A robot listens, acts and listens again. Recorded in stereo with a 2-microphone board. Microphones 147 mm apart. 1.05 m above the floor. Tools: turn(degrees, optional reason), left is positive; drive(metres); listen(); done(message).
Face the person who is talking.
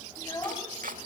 turn(degrees=25, reason="The child speaking: about 25° left or 155° left.")
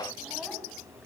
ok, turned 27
listen()
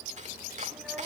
listen()
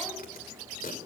done("I heard a child speaking, but can't make it out now. It was about straight ahead or 125° left.")